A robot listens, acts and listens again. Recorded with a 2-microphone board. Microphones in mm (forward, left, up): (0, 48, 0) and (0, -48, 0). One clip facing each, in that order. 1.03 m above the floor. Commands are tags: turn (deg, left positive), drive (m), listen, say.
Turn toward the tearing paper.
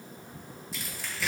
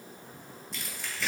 <turn deg="30"/>
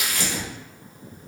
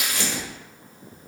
<turn deg="-30"/>
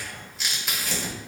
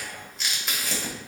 <say>Facing the tearing paper, 1 to 2 m away.</say>